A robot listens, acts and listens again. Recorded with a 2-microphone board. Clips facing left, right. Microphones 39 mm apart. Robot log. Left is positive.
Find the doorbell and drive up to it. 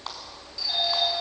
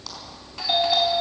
note: The doorbell: about 55° right or 125° right.
cmd yaw -55
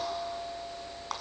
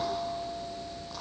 note: So it is at 60° right.
cmd yaw -60
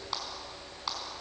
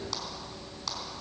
cmd idle
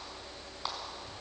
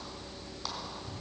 cmd idle
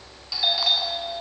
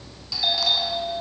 note: The doorbell is now 10° left.
cmd yaw +10
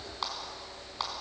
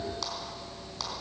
cmd idle
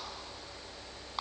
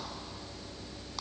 cmd idle
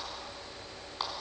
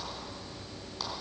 end: Facing where the doorbell came from. I can't hear it now. I did not reach it.